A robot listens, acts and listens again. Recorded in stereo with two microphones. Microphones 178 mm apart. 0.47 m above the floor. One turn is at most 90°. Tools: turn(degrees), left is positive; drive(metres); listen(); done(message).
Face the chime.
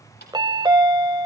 turn(degrees=-25)
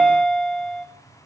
done("Facing the chime, under 1 m away.")